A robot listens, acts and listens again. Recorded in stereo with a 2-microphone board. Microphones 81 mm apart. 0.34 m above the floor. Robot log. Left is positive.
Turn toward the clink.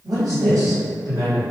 cmd idle
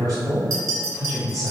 note: The clink: about 50° right or 130° right.
cmd yaw -50
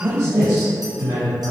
cmd idle
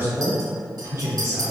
cmd idle
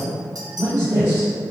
note: So it is at 75° right.
cmd yaw -75
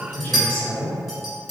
end: Facing the clink.